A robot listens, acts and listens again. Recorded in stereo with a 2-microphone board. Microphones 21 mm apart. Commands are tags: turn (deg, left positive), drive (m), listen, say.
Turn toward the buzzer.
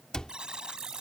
<turn deg="-40"/>
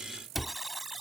<say>Found it: a buzzer, straight ahead.</say>